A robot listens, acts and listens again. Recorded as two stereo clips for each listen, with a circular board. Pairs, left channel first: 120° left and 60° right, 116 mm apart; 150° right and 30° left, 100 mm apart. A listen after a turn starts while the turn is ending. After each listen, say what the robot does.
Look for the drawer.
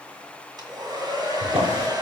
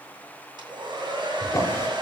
Turn 85° right.
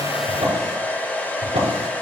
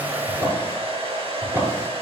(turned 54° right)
Turn 35° right.
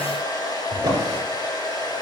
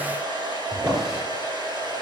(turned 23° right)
Turn 10° right.
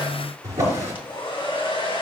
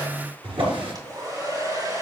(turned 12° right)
Found it: a drawer, straight ahead.